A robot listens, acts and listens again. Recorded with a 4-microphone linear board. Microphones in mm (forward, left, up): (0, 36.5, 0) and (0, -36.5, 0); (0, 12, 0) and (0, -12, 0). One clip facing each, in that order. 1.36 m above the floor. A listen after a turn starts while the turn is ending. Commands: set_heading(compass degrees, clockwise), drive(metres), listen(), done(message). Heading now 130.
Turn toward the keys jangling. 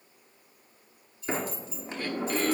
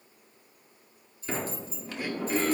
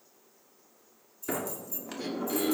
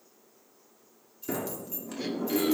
set_heading(170)
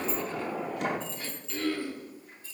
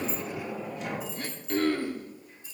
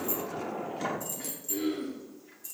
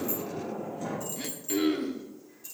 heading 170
set_heading(190)
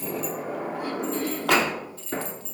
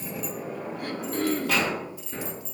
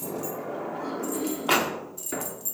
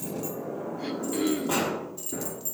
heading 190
set_heading(210)
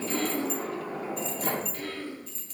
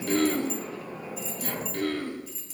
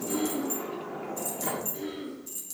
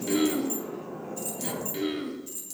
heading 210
done("Facing the keys jangling, 2 to 4 m away.")